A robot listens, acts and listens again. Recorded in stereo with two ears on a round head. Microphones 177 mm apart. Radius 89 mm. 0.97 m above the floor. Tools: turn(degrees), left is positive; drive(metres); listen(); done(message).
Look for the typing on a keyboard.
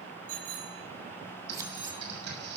turn(degrees=-60)
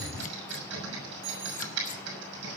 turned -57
turn(degrees=-65)
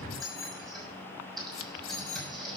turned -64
done("Found it: typing on a keyboard, straight ahead, over 4 m away.")